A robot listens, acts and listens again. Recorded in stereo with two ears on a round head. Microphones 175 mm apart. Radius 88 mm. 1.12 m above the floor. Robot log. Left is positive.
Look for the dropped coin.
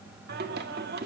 cmd idle
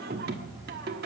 cmd idle
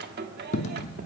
note: The dropped coin: about 35° left or 145° left.
cmd yaw +35
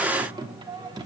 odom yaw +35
cmd idle
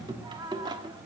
end: I heard a dropped coin, but can't make it out now. It was about straight ahead or 110° left.